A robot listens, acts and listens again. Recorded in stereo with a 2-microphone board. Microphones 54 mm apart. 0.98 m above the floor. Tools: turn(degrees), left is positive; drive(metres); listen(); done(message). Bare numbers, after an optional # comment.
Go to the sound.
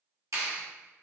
turn(-90)
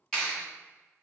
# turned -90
# So it is at 10° left.
turn(10)
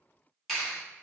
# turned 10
drive(1.0)
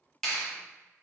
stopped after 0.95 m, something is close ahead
# The clap is now 10° left.
turn(10)
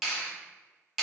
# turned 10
done("I am next to the clap.")